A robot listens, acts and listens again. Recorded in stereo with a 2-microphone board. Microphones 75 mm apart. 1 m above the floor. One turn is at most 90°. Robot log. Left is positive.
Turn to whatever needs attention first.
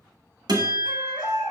cmd yaw +90
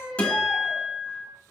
note: So it is at 10° right.
cmd yaw -10
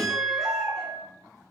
cmd idle
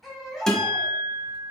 end: Found it: a baby crying, straight ahead, 1 to 2 m away.